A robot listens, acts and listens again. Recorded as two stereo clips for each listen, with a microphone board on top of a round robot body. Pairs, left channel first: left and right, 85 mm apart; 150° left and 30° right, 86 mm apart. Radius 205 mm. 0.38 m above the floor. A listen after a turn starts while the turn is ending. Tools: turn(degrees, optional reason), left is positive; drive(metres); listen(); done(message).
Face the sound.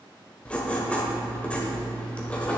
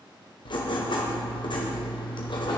turn(degrees=165, reason="The writing: 165° left.")
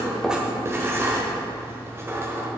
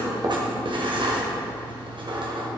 turn(degrees=-30, reason="The writing is now 30° right.")
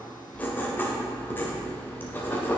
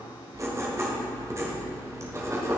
turn(degrees=25, reason="The writing is now 25° left.")
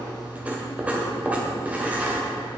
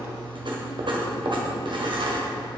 turn(degrees=-15, reason="The writing is now 15° right.")
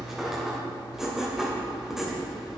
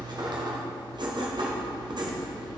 done("Facing the writing.")